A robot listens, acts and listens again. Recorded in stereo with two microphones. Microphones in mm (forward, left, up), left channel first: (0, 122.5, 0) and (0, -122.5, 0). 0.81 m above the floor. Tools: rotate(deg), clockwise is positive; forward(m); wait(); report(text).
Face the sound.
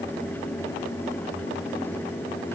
wait()
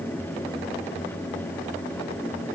wait()
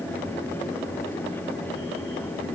report("I can't make out anything to turn to.")